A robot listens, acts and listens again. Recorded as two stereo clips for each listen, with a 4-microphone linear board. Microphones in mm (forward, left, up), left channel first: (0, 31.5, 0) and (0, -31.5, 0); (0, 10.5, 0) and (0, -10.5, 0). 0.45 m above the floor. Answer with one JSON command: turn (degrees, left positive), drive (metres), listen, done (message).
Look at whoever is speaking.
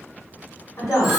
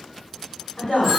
{"turn": 60}
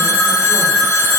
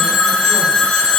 {"listen": true}
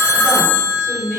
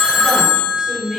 {"turn": 20}
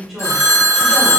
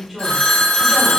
{"done": "Facing the woman speaking, 1 to 2 m away."}